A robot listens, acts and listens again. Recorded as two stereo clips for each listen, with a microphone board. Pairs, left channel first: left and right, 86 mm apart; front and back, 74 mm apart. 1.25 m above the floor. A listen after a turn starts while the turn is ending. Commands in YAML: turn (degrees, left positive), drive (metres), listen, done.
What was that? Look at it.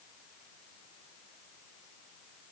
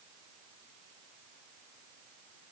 listen: true
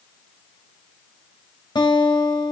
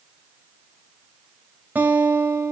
turn: 115
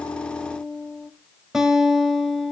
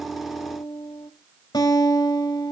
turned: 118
done: "Facing the guitar."